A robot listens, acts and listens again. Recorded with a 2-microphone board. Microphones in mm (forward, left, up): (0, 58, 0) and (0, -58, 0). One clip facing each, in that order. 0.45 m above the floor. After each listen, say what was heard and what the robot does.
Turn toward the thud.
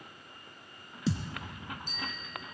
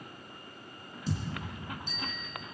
Turn 90° left.
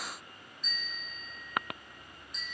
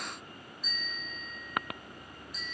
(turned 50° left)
Nothing new. It was at 40° left. Turn 40° left.
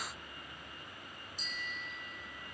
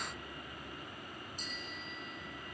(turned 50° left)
Nothing new. It was at 10° right. Turn 10° right.
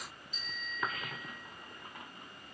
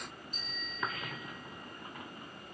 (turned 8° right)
Facing where the thud came from. I can't hear it now.